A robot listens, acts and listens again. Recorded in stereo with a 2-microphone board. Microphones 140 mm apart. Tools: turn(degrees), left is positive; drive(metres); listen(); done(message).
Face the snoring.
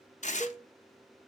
listen()
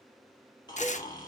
turn(degrees=30)
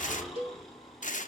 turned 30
done("Facing the snoring, 2 to 4 m away.")